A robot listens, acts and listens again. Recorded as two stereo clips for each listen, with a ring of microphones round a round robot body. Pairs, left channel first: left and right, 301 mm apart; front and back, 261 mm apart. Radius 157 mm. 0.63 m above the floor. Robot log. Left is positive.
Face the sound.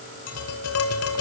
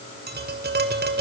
note: The tapping: 130° left.
cmd yaw +130
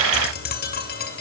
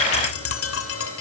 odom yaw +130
note: The tapping is now 30° left.
cmd yaw +30
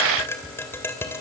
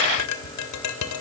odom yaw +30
end: Facing the tapping, 2 to 4 m away.